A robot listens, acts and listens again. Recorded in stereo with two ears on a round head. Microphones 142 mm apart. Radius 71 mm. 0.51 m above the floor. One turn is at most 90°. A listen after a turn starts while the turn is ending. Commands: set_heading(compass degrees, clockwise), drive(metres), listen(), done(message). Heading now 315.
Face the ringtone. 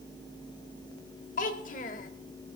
listen()
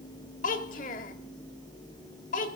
listen()
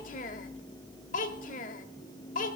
done("I can't make out a ringtone to turn to.")